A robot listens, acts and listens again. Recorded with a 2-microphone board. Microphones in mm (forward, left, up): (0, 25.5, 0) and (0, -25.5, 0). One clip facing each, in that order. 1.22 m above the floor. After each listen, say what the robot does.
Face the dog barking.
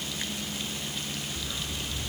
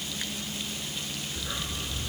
Turn 30° right.
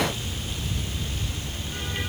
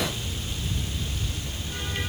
Facing the dog barking.